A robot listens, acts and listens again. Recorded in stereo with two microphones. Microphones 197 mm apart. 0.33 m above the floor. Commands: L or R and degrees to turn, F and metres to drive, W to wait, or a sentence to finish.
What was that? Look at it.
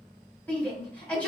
L30
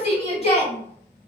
L140
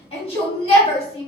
L40
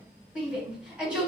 Facing the shout, 1 to 2 m away.